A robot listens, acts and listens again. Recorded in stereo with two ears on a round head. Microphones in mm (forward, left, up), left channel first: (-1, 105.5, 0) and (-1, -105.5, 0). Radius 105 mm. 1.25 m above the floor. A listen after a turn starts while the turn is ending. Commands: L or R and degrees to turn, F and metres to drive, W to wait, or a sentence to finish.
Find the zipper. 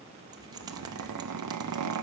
R90
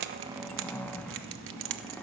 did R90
Found it: a zipper, straight ahead.